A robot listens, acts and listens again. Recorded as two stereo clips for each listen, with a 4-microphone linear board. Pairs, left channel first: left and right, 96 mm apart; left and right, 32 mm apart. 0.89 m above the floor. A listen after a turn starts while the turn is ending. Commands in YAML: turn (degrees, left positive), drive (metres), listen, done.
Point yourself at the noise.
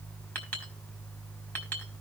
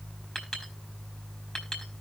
turn: 15
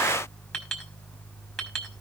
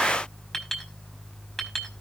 done: "Facing the clink, over 4 m away."